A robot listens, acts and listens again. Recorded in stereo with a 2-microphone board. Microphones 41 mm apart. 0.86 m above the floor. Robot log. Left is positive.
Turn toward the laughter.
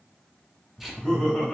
note: The laughter: about 20° left or 160° left.
cmd yaw +20
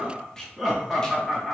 end: Facing the laughter.